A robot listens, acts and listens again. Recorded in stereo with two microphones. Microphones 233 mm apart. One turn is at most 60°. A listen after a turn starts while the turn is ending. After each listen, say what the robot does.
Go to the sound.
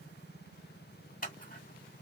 Turn 40° left.
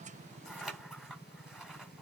Drive 1.0 m forward.
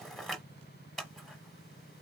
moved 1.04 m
Drive 1.0 m forward.
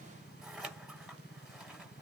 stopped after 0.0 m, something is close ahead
Arrived at the scissors, straight ahead.